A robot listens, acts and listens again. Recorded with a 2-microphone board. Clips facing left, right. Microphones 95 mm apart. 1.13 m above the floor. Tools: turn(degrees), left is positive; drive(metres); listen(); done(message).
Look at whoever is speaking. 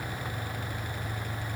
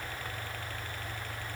listen()
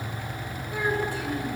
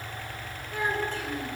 turn(degrees=30)
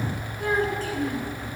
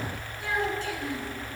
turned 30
turn(degrees=140)
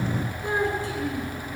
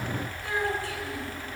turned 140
turn(degrees=25)
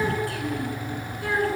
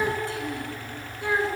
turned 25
turn(degrees=-25)
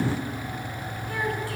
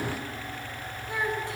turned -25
turn(degrees=-20)
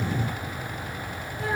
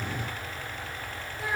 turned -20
done("Found it: a child speaking, straight ahead.")